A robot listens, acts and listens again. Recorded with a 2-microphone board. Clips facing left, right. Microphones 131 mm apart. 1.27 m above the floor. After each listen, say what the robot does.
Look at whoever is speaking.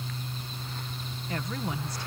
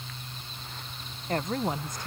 Turn 45° right.
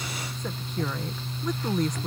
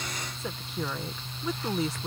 Facing the woman speaking.